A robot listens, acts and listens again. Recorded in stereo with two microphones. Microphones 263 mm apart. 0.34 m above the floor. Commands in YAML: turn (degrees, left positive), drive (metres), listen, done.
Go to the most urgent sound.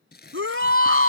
turn: -55
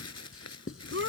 turn: -65
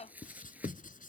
listen: true
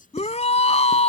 turn: 25
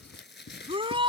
turn: -20
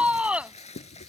drive: 1.0
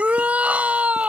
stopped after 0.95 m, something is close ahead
done: "I am next to the shout."